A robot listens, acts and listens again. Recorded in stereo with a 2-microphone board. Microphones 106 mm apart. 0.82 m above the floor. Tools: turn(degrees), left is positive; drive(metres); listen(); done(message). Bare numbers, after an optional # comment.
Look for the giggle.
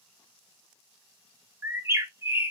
listen()
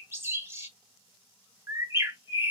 listen()
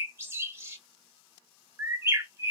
done("I can't make out a giggle, only a bird.")